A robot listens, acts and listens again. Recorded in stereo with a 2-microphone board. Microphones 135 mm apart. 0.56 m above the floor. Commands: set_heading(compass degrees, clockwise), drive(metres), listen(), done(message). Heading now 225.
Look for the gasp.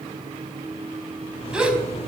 set_heading(255)
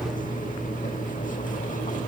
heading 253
listen()
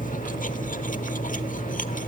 done("I heard a gasp, but can't make it out now. It was about 20° left or 145° right.")